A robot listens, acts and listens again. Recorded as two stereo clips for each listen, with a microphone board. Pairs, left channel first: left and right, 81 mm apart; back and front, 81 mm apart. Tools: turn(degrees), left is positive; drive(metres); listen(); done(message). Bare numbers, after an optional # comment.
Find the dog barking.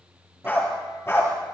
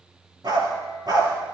# The dog barking: 30° left.
turn(30)
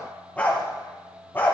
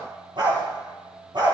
# The dog barking is now 25° left.
turn(25)
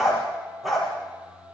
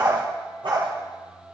done("Facing the dog barking, over 4 m away.")